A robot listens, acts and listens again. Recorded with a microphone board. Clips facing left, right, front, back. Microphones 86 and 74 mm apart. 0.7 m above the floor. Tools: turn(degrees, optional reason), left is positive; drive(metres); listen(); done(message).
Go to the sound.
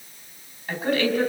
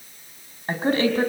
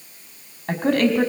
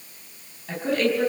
turn(degrees=-30, reason="The woman speaking: 30° right.")
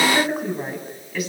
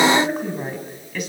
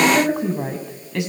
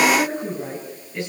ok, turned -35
drive(metres=1.0)
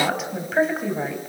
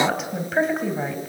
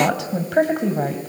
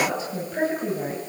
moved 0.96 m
drive(metres=1.0)
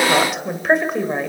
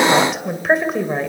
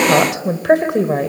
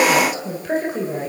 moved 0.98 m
drive(metres=1.0)
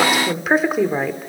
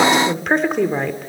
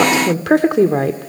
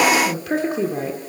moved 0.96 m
drive(metres=1.0)
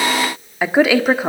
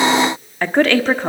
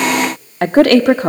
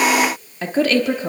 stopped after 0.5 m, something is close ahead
turn(degrees=10, reason="The woman speaking is now 10° left.")
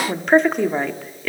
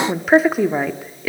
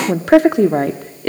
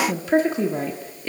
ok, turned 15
done("I am next to the woman speaking.")